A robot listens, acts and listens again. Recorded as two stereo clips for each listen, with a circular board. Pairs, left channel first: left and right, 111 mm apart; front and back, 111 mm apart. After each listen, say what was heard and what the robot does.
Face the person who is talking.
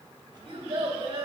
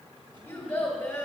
The child speaking: 70° right. Turn 70° right.
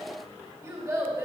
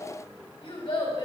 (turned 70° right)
The child speaking is now 30° right. Turn 30° right.
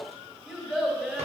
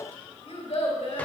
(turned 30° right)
Found it: a child speaking, straight ahead.